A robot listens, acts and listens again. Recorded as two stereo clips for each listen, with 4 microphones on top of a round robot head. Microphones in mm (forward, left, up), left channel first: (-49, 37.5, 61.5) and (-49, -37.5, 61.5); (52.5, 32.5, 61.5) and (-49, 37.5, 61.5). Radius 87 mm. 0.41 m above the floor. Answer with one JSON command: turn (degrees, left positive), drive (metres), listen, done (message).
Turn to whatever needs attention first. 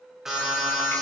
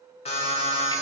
{"done": "Found it: an alarm, straight ahead, over 4 m away."}